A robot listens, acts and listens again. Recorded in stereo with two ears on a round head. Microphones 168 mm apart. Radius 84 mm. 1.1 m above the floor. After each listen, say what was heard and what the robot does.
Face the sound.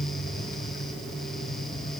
Keep listening.
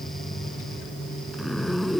Turn 30° left.
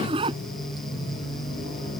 So it is at 30° right. Turn 30° right.
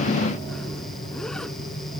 Keep listening.
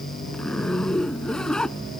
Found it: a zipper, straight ahead.